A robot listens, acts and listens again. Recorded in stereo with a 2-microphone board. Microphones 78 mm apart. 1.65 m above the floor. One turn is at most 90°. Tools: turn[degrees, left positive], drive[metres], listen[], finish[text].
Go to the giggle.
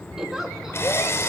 Action: turn[-30]
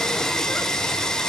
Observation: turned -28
Action: listen[]
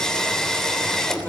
Action: listen[]
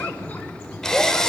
Action: finish[I heard a giggle, but can't make it out now. It was about 25° left or 145° right. I did not reach it.]